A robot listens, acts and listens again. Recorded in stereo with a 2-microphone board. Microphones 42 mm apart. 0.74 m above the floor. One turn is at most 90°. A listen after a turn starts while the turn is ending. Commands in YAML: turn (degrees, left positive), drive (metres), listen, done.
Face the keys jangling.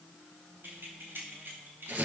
turn: -65
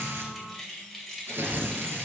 done: "Facing the keys jangling, 2 to 4 m away."